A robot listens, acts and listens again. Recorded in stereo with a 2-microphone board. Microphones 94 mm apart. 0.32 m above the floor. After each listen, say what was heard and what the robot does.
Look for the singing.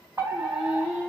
Turn 30° right.
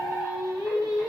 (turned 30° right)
So it is at 135° right. Turn 135° right.
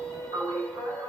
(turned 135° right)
The singing is now 15° left. Turn 15° left.
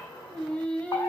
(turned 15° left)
The singing is now 15° left. Turn 15° left.
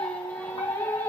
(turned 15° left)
The singing is now 15° left. Turn 15° left.
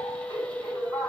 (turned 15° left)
The singing is now 10° left. Turn 10° left.
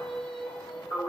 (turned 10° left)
Facing the singing, 1 to 2 m away.